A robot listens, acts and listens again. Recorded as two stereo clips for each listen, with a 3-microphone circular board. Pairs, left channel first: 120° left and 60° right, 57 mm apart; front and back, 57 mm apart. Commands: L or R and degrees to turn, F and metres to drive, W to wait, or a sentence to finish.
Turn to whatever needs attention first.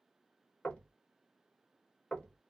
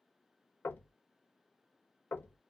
W
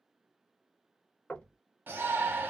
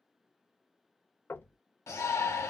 R10
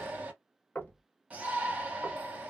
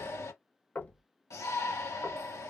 Facing the shout.